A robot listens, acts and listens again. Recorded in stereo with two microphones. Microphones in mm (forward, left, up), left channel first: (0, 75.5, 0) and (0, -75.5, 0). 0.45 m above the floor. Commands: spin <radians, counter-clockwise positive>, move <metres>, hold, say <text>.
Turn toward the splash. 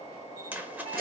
spin -0.52
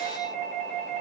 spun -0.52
hold
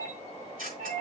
say I heard a splash, but can't make it out now. It was about 20° left or 140° right.